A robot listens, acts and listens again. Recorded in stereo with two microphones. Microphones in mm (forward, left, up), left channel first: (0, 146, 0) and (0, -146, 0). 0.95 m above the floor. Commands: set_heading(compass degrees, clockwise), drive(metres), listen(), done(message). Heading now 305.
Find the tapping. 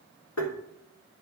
set_heading(245)
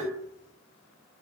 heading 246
done("Facing the tapping, 2 to 4 m away.")